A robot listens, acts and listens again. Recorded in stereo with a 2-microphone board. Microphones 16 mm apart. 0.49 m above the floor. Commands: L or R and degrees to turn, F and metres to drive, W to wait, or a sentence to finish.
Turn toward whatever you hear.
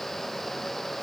W
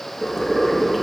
R60
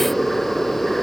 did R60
R60
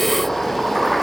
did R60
L10
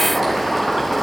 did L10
Facing the boiling, over 4 m away.